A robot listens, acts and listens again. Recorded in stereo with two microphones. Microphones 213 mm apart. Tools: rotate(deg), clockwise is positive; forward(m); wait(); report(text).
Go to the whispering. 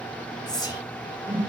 rotate(-20)
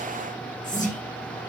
wait()
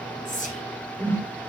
rotate(-140)
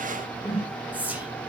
forward(1.0)
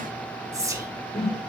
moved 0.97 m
rotate(15)
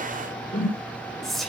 forward(1.0)
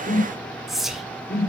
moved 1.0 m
forward(1.0)
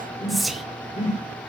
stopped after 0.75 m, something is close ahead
report("I am next to the whispering.")